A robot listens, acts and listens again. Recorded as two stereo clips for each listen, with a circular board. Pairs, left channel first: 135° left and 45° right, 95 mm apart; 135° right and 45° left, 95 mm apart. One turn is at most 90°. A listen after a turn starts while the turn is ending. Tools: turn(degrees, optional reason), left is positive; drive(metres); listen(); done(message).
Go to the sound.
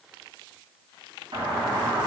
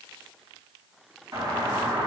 turn(degrees=-10, reason="The doorbell: 10° right.")
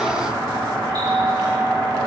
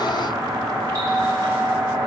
drive(metres=1.0)
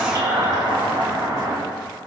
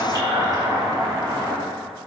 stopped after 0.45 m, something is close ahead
done("Something is in my way. I am facing the doorbell but have not reached it.")